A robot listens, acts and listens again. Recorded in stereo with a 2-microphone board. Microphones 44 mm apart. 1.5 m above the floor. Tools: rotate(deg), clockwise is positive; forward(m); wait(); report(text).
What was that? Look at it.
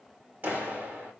rotate(40)
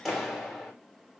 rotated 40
report("Found it: a clap, straight ahead, 2 to 4 m away.")